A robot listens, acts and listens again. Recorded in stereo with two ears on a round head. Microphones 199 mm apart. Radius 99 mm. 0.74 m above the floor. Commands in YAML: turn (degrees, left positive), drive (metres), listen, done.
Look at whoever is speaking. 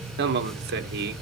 turn: -45
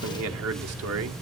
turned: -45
turn: -85
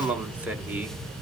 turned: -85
done: "Found it: a man speaking, straight ahead."